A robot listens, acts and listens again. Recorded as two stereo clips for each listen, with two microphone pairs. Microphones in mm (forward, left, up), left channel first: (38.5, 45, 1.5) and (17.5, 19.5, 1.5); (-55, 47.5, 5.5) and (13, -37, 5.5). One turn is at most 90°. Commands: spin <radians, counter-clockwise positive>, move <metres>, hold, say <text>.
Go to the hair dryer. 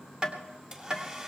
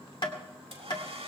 spin -1.13
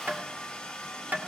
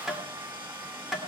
spin -0.26
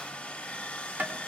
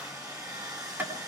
move 1.0
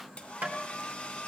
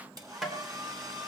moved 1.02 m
move 1.0
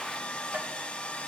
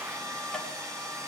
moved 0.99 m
move 1.0
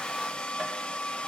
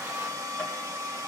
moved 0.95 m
move 1.0
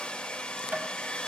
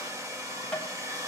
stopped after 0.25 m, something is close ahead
say I am next to the hair dryer.